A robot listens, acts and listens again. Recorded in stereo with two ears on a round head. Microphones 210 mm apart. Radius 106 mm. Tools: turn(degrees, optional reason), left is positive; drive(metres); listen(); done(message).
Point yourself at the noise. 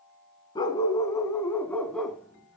turn(degrees=30)
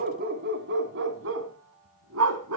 turn(degrees=-70, reason="So it is at 70° right.")
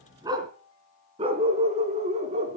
turn(degrees=-30, reason="The dog barking is now 30° right.")
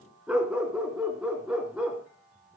done("Facing the dog barking, 2 to 4 m away.")